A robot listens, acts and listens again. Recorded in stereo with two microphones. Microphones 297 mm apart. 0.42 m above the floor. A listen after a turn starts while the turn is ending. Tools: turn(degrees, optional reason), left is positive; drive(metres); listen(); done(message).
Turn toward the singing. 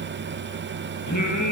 turn(degrees=90)
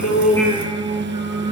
turn(degrees=-15, reason="So it is at 15° right.")
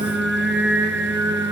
turn(degrees=-10, reason="The singing is now 10° right.")
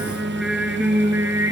turn(degrees=-10, reason="The singing is now 10° right.")
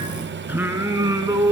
turn(degrees=-10, reason="The singing is now 10° right.")
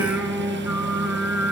done("Found it: singing, straight ahead, 2 to 4 m away.")